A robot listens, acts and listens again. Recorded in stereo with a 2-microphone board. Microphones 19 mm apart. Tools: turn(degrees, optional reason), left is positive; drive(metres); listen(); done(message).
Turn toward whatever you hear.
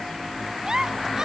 turn(degrees=-35, reason="The giggle: about 35° right or 145° right.")
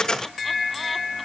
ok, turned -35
listen()
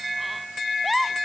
done("Facing the giggle.")